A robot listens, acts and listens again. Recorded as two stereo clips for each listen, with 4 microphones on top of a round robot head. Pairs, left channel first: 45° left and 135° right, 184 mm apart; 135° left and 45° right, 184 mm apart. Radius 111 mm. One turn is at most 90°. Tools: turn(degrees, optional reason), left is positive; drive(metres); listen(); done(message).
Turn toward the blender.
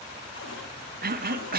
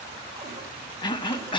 listen()
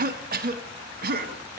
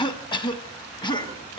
listen()
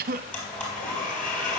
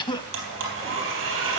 turn(degrees=-35, reason="The blender: 35° right.")
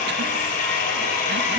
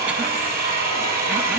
done("Found it: a blender, straight ahead, 2 to 4 m away.")